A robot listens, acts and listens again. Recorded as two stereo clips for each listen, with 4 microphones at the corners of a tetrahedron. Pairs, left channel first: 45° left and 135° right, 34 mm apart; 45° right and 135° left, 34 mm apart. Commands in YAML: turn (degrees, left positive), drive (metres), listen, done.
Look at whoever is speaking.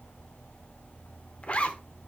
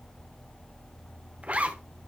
listen: true
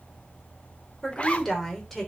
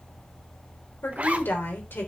turn: -40
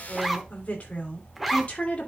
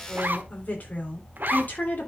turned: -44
turn: -10
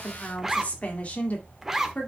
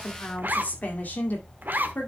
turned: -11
done: "Found it: a woman speaking, straight ahead."